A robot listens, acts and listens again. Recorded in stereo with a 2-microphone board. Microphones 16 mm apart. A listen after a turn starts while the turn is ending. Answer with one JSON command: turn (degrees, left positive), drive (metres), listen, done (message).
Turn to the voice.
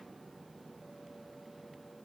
{"listen": true}
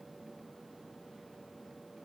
{"listen": true}
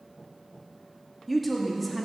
{"turn": 30}
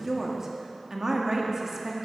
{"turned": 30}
{"turn": -20}
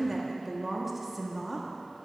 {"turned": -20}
{"done": "Found it: a woman speaking, straight ahead, 1 to 2 m away."}